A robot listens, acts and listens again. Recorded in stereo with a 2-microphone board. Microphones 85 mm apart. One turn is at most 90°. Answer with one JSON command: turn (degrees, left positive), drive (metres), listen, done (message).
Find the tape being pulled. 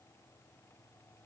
{"listen": true}
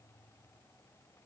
{"listen": true}
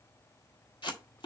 {"turn": 65}
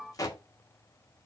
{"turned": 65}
{"turn": 45}
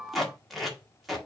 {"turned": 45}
{"done": "Found it: tape being pulled, straight ahead, 1 to 2 m away."}